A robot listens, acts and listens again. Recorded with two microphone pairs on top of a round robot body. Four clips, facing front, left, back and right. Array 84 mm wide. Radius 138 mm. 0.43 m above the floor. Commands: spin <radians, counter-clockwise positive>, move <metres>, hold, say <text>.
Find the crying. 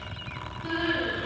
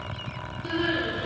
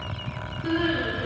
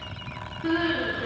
spin -2.01
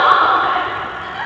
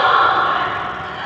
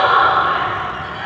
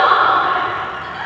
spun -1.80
spin -0.17
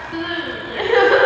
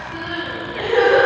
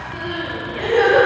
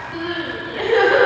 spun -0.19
say Found it: crying, straight ahead.